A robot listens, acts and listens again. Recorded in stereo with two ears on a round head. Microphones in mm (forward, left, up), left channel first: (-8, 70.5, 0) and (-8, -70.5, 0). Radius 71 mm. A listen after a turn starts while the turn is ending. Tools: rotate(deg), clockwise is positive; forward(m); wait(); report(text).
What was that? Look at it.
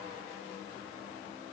wait()
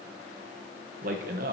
rotate(60)
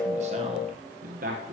rotate(60)
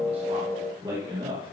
rotate(30)
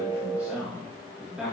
report("Facing the man speaking, 2 to 4 m away.")